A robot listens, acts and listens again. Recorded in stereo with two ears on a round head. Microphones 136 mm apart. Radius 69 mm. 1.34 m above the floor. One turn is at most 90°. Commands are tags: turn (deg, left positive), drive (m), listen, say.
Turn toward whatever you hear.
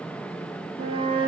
<turn deg="-35"/>
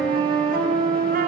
<turn deg="-90"/>
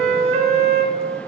<turn deg="-45"/>
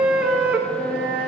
<turn deg="-10"/>
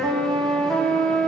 <say>Found it: a flute, straight ahead, 1 to 2 m away.</say>